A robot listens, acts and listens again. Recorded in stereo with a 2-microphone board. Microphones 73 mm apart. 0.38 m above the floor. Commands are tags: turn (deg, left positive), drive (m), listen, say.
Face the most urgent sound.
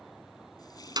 <listen/>
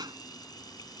<listen/>
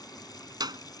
<say>I can't make out anything urgent, only a clap.</say>